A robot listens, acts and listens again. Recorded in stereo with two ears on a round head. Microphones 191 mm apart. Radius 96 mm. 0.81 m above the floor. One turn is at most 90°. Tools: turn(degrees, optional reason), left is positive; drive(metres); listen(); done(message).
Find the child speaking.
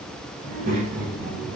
turn(degrees=-45, reason="The child speaking: about 45° right or 135° right.")
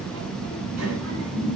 turn(degrees=-80, reason="So it is at 80° right.")
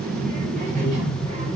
turn(degrees=-35, reason="The child speaking is now 35° right.")
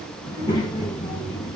turn(degrees=20, reason="The child speaking is now 20° left.")
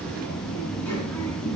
turn(degrees=10, reason="The child speaking is now 10° left.")
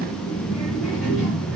done("Found it: a child speaking, straight ahead, over 4 m away.")